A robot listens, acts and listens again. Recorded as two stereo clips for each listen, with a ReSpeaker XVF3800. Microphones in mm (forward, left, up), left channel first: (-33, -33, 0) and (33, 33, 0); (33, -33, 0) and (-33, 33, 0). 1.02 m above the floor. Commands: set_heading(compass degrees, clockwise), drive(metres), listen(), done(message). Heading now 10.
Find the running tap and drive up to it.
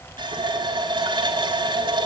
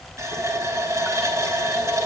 set_heading(295)
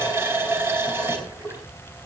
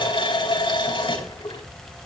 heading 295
set_heading(315)
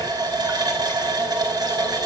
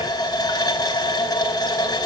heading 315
drive(1.0)
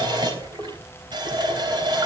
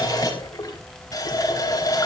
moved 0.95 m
drive(1.0)
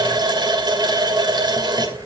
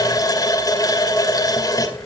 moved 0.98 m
drive(1.0)
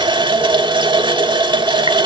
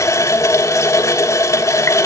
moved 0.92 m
set_heading(305)
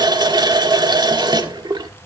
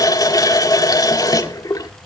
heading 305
drive(1.0)
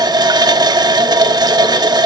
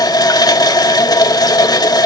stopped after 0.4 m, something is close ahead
done("I am next to the running tap.")